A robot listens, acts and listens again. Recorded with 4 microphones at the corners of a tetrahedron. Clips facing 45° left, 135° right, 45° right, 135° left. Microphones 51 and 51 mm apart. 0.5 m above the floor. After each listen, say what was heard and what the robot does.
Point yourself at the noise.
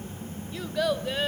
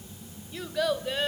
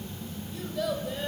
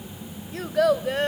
The child speaking: 130° left. Turn 130° left.
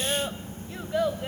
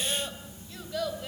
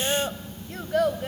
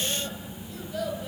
The child speaking is now 20° right. Turn 20° right.
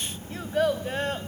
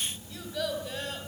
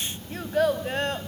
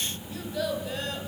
Facing the child speaking, 2 to 4 m away.